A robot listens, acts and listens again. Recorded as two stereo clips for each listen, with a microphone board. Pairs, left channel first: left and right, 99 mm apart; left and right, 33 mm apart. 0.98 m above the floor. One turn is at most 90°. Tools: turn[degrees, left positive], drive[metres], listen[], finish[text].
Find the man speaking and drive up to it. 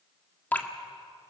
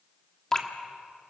Action: listen[]
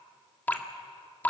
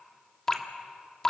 Action: listen[]
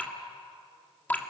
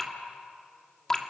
Action: finish[I can't make out a man speaking to turn to.]